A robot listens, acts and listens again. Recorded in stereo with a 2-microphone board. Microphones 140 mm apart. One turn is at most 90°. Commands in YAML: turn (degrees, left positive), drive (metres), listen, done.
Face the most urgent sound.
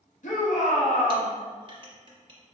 turn: 60
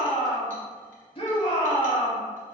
turn: 45
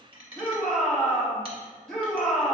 done: "Facing the shout, 1 to 2 m away."